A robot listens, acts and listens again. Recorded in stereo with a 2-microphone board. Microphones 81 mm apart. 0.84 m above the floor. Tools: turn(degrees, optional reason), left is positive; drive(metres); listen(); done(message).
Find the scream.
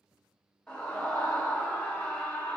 turn(degrees=30)
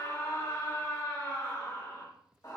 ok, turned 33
turn(degrees=135, reason="So it is at 135° left.")
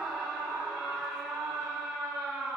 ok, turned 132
done("Found it: a scream, straight ahead.")